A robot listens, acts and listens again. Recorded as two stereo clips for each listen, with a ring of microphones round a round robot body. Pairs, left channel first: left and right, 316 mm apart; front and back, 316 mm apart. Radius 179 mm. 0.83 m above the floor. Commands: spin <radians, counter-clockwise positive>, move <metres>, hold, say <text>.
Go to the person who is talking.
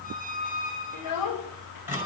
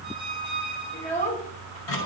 spin 1.22
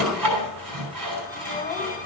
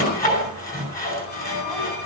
hold
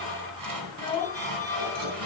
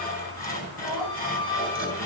spin 0.26
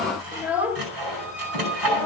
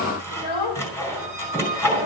move 1.0
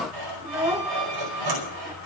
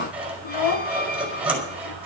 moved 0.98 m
spin -0.17
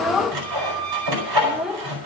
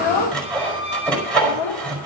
move 1.0
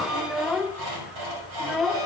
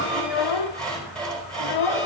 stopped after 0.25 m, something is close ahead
say Arrived at the child speaking, straight ahead.